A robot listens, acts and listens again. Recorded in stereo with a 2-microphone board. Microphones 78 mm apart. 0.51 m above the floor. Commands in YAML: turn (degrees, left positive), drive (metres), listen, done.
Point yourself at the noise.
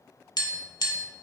turn: 60
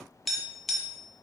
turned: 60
done: "Found it: tapping, straight ahead."